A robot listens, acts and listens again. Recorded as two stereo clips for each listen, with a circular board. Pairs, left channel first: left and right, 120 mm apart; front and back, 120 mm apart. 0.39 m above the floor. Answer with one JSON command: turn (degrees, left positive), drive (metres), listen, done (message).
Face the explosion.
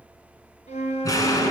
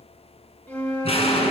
{"turn": 30}
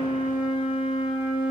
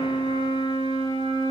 {"done": "Facing where the explosion came from. I can't hear it now."}